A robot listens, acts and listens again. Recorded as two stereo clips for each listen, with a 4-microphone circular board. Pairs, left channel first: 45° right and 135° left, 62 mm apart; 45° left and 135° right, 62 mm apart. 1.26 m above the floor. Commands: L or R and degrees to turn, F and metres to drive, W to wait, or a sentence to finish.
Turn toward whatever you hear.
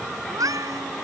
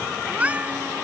L160
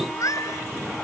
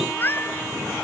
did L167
R10
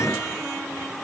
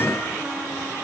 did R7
W
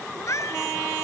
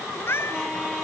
Facing the cat meowing.